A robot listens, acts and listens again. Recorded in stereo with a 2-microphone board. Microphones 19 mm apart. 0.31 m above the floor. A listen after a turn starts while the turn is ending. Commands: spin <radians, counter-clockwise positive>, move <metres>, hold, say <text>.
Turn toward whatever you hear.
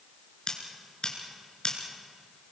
spin 0.87
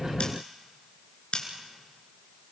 spin 1.40
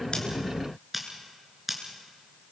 spin -0.17
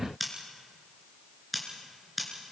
say Facing the scissors, over 4 m away.